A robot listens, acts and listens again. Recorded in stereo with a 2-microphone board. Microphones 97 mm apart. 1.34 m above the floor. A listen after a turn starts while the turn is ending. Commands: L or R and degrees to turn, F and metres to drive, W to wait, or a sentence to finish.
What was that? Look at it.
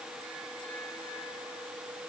W
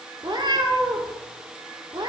R55
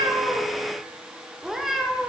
Facing the cat meowing.